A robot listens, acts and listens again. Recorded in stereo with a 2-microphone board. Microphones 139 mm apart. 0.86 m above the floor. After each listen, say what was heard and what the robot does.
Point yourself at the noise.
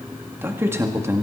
The man speaking: about 20° right or 160° right. Turn 20° right.
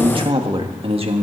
So it is at 135° right. Turn 135° right.
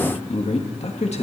The man speaking is now 50° left. Turn 50° left.
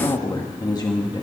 The man speaking is now 30° left. Turn 30° left.
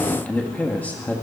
The man speaking is now 10° left. Turn 10° left.
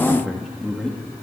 Facing the man speaking.